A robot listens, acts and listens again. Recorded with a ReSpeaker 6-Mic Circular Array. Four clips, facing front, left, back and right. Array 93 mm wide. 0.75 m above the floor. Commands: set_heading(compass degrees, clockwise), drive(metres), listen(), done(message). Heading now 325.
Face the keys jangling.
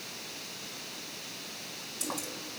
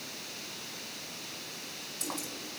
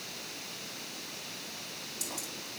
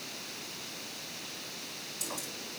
set_heading(290)
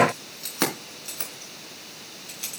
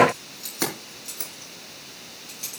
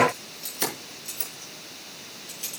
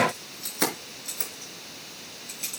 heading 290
done("Facing the keys jangling, over 4 m away.")